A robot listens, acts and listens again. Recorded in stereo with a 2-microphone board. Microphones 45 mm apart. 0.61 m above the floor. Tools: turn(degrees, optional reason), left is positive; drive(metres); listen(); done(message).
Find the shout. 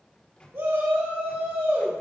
turn(degrees=-70, reason="The shout: about 70° right or 110° right.")
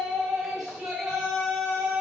done("Facing the shout.")